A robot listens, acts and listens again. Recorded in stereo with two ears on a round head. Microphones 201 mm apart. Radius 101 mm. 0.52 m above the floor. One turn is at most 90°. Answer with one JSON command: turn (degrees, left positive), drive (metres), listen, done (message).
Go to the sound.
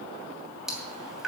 {"turn": 30}
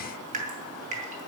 {"turn": -35}
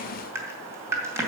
{"turn": -10}
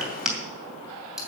{"drive": 1.0}
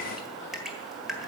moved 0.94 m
{"drive": 1.0}
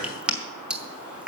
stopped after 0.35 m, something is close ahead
{"done": "I am next to the dripping."}